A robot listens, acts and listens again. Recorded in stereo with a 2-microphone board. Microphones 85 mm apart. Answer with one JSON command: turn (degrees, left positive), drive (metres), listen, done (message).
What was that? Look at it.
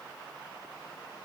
{"listen": true}
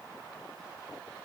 {"listen": true}
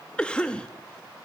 {"turn": 30}
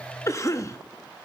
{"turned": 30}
{"turn": 135}
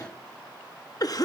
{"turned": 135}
{"turn": 55}
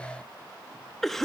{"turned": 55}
{"done": "Found it: a cough, straight ahead, 1 to 2 m away."}